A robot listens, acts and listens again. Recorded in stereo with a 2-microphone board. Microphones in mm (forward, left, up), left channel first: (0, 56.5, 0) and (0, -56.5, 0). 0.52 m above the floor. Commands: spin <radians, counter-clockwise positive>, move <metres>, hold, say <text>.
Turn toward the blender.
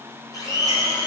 spin 0.61
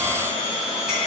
spin 2.01
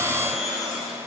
say Facing the blender, 1 to 2 m away.